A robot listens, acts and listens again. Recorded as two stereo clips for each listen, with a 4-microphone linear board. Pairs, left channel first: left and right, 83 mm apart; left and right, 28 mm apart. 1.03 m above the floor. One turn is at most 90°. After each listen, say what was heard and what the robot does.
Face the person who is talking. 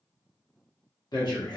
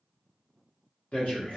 The man speaking: about 55° left or 125° left. Turn 55° left.
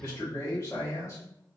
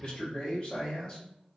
So it is at 40° left. Turn 40° left.
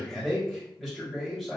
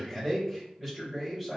Facing the man speaking.